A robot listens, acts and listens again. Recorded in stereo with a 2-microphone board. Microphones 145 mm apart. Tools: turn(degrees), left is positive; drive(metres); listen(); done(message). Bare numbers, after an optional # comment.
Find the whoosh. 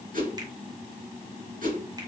# The whoosh: about 70° right or 110° right.
turn(-70)
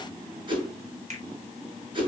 # So it is at 35° right.
turn(-35)
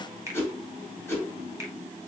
# The whoosh is now 15° left.
turn(15)
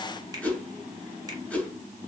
# The whoosh is now 10° left.
turn(10)
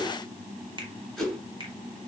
done("Facing the whoosh.")